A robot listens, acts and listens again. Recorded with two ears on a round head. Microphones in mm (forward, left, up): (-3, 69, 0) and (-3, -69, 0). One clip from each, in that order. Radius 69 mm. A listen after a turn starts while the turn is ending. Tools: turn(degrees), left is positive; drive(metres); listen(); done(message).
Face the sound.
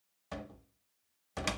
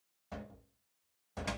turn(degrees=60)
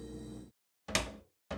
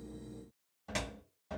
turn(degrees=55)
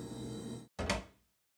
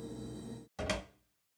done("Found it: a cupboard door, straight ahead.")